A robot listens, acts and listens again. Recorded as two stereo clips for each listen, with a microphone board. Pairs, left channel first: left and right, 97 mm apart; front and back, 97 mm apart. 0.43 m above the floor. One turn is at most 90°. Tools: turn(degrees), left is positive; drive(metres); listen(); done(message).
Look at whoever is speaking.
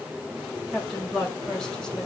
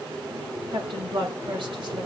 turn(degrees=90)
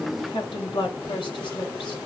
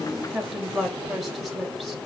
turn(degrees=90)
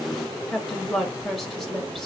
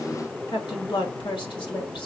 done("Found it: a woman speaking, straight ahead, 1 to 2 m away.")